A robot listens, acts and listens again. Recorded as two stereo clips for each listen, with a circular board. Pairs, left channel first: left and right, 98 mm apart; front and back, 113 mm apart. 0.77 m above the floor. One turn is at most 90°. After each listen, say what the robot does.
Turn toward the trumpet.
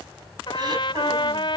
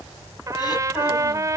Turn 90° left.
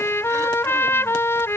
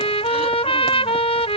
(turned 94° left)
Turn 25° left.
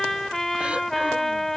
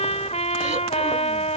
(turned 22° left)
Found it: a trumpet, straight ahead.